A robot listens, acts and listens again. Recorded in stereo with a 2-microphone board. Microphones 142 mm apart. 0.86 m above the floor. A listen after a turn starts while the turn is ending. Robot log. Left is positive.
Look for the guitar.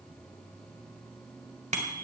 cmd idle
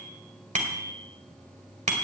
cmd idle
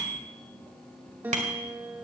cmd yaw -30
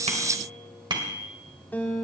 note: So it is at 15° left.
cmd yaw +15
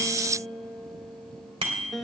end: Found it: a guitar, straight ahead, 2 to 4 m away.